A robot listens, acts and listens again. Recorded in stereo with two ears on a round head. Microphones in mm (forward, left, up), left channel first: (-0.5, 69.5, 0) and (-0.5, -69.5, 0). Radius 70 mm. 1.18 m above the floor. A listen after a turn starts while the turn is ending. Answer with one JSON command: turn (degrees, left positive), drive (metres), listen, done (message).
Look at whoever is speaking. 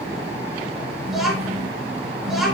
{"turn": 30}
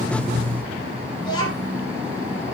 {"turn": 150}
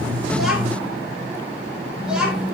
{"done": "Found it: a child speaking, straight ahead."}